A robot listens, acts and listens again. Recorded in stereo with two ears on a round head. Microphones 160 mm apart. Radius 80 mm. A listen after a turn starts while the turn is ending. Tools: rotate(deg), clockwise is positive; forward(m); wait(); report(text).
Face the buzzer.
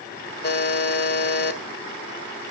rotate(-60)
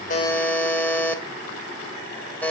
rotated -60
rotate(-10)
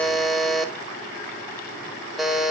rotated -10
report("Found it: a buzzer, straight ahead.")